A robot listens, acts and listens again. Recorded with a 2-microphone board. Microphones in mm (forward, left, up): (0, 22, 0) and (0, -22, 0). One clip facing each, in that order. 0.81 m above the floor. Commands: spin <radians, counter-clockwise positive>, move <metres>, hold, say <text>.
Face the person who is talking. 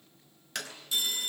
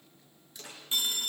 hold
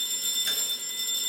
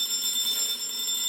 hold
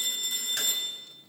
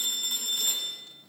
say I can't make out anyone speaking, only a clap and a phone ringing.